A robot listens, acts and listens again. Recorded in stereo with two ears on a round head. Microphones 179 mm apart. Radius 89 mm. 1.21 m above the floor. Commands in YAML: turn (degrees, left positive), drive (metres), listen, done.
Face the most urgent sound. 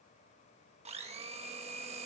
listen: true
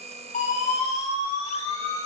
turn: 35
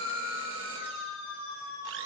turn: 105
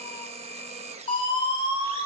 turn: 25
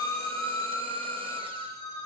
turn: 20
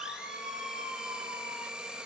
done: "Found it: a siren, straight ahead, over 4 m away."